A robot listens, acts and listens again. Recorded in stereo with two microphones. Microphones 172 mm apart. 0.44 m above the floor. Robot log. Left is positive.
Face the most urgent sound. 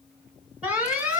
cmd yaw -30
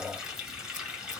note: So it is at 140° right.
cmd yaw -140
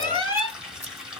note: The alarm is now 30° left.
cmd yaw +30
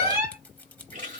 note: The alarm is now 20° right.
cmd yaw -20
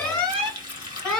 end: Facing the alarm.